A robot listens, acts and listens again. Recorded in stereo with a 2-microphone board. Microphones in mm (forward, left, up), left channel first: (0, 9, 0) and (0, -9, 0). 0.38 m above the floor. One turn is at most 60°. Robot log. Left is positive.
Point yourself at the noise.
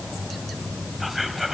cmd yaw -30
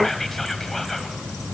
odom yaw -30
note: So it is at 15° left.
cmd yaw +15
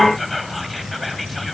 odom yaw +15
end: Facing the whispering, 2 to 4 m away.